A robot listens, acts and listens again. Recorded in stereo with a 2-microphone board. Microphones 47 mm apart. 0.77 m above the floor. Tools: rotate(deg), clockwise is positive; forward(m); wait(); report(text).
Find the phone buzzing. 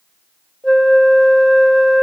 wait()
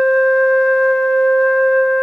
wait()
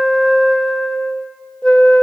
report("I can't make out a phone buzzing, only a flute.")